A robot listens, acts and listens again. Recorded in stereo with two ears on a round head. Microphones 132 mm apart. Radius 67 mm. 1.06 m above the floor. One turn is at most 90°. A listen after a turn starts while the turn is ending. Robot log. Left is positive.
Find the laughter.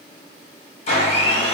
cmd idle
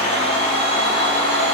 cmd idle
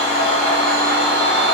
end: I can't make out laughter, only a blender.